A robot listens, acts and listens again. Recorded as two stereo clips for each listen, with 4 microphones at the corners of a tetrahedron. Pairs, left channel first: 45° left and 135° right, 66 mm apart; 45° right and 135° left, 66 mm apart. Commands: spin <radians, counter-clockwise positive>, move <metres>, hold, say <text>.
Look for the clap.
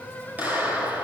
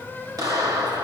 spin 2.79
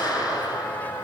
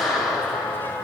spin 0.70
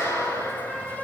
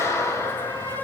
say Facing the clap, over 4 m away.